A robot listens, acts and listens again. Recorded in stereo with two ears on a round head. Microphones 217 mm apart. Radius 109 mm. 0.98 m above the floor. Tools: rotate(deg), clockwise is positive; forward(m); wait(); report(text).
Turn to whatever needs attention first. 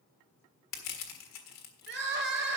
rotate(45)
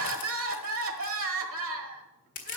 rotate(80)
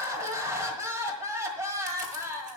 rotate(15)
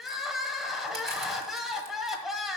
report("Facing the crying, 1 to 2 m away.")